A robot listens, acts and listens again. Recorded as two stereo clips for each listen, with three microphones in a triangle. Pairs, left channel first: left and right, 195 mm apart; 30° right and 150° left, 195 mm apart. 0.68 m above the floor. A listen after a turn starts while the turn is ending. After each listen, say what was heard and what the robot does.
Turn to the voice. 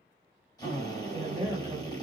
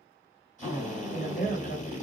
The woman speaking: 20° right. Turn 20° right.
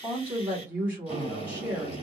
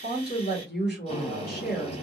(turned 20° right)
The woman speaking is now 10° right. Turn 10° right.
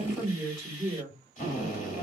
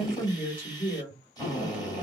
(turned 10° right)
Found it: a woman speaking, straight ahead.